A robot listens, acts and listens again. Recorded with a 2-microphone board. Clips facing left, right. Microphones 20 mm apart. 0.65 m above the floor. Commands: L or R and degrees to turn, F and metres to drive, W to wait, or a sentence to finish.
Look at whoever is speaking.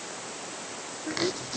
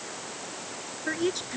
R55
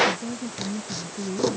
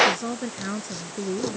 R70
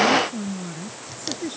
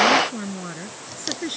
R35
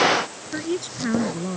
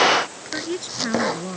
Found it: a woman speaking, straight ahead.